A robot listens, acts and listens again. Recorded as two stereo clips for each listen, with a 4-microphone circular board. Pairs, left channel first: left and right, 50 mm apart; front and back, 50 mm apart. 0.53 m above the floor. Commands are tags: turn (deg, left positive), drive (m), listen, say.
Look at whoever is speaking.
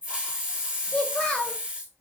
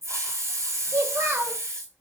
<turn deg="160"/>
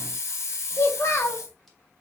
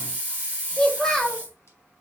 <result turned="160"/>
<turn deg="80"/>
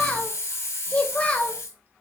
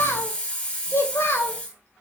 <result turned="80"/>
<turn deg="25"/>
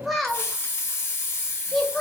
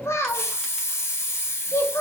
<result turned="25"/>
<say>Found it: a child speaking, straight ahead, 1 to 2 m away.</say>